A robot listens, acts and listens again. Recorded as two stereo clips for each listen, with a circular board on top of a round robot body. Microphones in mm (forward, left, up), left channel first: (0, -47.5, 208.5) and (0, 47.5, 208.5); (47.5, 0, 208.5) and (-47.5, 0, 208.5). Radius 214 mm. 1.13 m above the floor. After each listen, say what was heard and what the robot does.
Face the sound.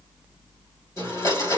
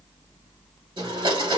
The blender: 150° right. Turn 150° right.
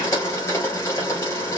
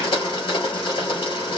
The blender is now 35° right. Turn 35° right.
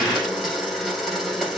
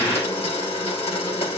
Facing the blender, 2 to 4 m away.